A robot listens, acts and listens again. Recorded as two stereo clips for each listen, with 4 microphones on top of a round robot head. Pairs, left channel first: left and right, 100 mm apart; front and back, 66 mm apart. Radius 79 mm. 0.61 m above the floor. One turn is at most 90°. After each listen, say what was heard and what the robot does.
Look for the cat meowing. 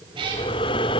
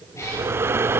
The cat meowing: 55° right. Turn 55° right.
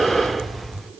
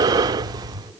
Keep listening.
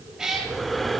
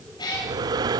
Facing the cat meowing.